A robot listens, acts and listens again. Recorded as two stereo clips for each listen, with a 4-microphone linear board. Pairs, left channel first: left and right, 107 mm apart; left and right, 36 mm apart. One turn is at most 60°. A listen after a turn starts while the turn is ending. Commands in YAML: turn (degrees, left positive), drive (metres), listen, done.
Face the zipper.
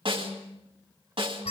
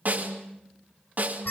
listen: true
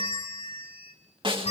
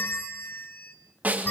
listen: true
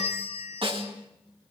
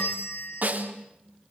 done: "I can't make out a zipper to turn to."